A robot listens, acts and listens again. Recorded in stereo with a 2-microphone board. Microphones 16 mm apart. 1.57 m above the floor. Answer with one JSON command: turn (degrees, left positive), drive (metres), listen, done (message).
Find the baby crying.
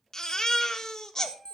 {"turn": 35}
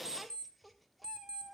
{"listen": true}
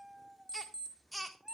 {"done": "Found it: a baby crying, straight ahead."}